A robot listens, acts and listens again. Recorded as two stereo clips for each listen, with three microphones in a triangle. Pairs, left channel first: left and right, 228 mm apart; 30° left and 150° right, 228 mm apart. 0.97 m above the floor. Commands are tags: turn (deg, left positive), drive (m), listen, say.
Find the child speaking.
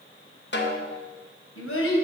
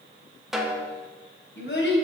<turn deg="65"/>
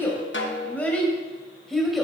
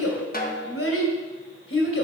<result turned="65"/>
<say>Found it: a child speaking, straight ahead, 2 to 4 m away.</say>